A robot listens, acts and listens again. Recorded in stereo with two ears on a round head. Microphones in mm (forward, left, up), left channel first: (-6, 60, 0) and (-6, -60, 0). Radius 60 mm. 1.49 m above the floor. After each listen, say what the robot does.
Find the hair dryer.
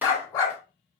Keep listening.
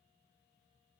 Keep listening.
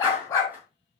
I can't make out a hair dryer to turn to.